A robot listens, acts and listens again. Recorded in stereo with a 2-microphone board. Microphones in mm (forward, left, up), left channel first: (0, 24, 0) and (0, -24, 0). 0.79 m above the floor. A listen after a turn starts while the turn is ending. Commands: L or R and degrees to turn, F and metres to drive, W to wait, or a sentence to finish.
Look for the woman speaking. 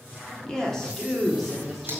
R30
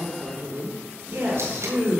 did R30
R130
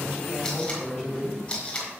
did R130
Facing the woman speaking, 2 to 4 m away.